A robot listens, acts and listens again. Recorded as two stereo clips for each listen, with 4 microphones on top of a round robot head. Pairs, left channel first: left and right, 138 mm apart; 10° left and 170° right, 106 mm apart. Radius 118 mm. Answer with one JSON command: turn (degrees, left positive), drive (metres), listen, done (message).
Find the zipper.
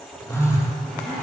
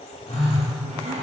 {"turn": 180}
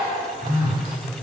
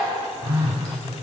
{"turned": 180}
{"listen": true}
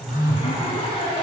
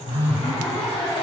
{"turn": 45}
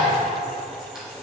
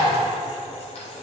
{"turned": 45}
{"done": "Facing the zipper, 2 to 4 m away."}